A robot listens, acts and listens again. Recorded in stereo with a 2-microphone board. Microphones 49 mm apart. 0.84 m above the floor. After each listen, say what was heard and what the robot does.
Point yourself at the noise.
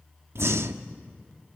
The breathing: about 65° right or 115° right. Turn 65° right.
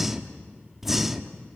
Found it: breathing, straight ahead, 1 to 2 m away.